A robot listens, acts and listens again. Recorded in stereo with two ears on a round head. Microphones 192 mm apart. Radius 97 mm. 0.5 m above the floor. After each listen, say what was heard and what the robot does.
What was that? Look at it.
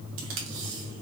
The tape being pulled: about 65° right or 115° right. Turn 65° right.
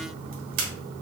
So it is at 45° right. Turn 45° right.
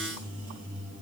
Keep listening.
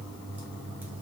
Keep listening.
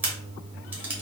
The tape being pulled is now 10° right. Turn 10° right.
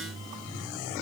Keep listening.
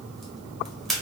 Found it: tape being pulled, straight ahead, 1 to 2 m away.